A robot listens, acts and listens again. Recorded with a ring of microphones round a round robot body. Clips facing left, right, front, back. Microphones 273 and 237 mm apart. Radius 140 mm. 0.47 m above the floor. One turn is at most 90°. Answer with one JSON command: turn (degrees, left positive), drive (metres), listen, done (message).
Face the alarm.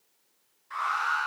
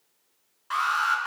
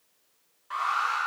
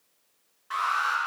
{"turn": -90}
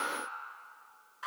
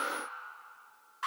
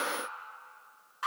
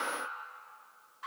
{"turn": -20}
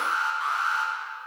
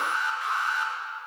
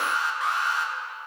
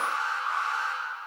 {"done": "Found it: an alarm, straight ahead, over 4 m away."}